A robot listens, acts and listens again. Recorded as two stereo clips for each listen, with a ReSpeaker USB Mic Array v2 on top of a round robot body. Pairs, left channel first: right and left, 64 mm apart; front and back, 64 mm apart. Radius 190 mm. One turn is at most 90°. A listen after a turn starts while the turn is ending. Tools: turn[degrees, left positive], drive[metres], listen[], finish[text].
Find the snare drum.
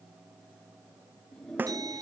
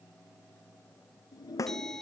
Thought: The snare drum: 30° left.
Action: turn[30]
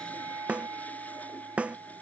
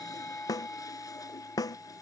Thought: The snare drum is now 20° left.
Action: turn[20]
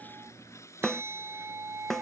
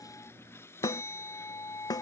Action: finish[Facing the snare drum.]